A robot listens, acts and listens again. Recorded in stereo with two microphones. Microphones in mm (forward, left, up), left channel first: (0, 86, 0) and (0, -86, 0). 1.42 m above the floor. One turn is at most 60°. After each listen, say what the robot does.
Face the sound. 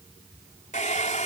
Turn 45° left.
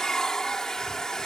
Found it: a hair dryer, straight ahead.